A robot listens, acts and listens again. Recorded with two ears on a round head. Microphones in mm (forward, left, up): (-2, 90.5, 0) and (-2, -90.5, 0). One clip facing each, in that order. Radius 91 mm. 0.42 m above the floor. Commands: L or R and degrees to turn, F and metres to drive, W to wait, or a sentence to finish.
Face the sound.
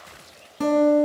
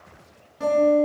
L70
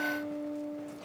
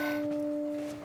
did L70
Found it: a guitar, straight ahead.